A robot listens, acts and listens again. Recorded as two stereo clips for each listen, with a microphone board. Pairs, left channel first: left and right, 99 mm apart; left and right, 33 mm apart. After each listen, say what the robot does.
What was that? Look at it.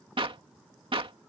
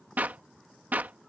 Turn 60° right.
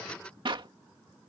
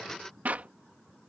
Turn 55° right.
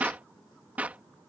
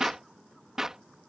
Turn 15° right.
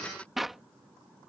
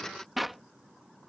Facing the clap.